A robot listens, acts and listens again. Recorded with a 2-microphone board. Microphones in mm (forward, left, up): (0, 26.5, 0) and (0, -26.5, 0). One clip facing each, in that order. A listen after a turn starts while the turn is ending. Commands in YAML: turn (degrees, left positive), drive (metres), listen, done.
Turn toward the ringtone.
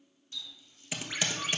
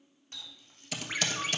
turn: -30
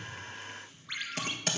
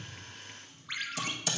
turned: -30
done: "Facing the ringtone."